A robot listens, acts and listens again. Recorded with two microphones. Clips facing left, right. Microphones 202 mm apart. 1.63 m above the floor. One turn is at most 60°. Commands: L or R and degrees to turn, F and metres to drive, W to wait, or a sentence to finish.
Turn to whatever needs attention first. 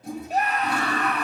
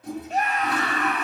L35
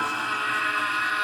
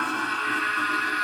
L60
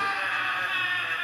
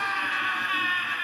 L50
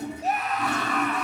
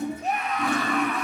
Facing the scream.